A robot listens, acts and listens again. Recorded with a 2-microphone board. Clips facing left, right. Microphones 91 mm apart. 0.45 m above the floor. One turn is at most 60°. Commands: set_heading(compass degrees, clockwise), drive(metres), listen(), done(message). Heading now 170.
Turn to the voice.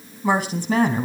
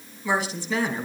set_heading(125)
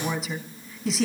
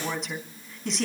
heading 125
done("Facing the woman speaking.")